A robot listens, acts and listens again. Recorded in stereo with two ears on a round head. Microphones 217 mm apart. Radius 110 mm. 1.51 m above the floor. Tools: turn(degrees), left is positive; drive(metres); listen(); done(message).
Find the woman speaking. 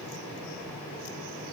listen()
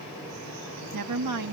turn(degrees=-90)
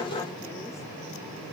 listen()
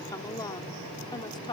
turn(degrees=20)
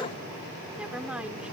done("Facing the woman speaking.")